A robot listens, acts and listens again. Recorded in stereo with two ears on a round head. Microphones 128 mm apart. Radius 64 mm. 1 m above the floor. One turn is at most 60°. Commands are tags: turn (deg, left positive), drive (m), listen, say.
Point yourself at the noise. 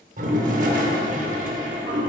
<turn deg="-60"/>
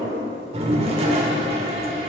<turn deg="-50"/>
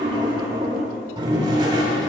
<turn deg="-35"/>
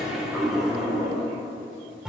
<say>Found it: a toilet flushing, straight ahead.</say>